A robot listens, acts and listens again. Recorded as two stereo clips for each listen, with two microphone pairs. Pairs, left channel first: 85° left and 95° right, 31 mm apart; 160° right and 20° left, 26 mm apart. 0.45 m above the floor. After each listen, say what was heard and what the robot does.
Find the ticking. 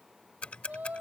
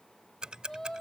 The ticking: 55° left. Turn 55° left.
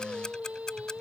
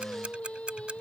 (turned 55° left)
Keep listening.
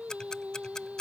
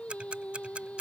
The ticking is now 20° left. Turn 20° left.
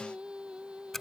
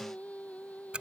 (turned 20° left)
Found it: ticking, straight ahead.